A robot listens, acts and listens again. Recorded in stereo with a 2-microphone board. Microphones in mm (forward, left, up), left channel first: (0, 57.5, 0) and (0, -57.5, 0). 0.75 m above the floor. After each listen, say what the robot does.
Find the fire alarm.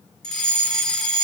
Turn 30° left.
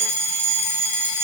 Turn 25° right.
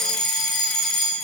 Found it: a fire alarm, straight ahead.